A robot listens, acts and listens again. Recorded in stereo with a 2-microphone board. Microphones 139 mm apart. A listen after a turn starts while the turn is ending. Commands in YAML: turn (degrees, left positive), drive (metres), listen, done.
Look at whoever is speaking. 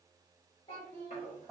turn: 35
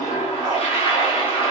listen: true
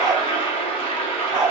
listen: true
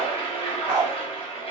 done: "I heard a child speaking, but can't make it out now. It was about straight ahead or 110° left."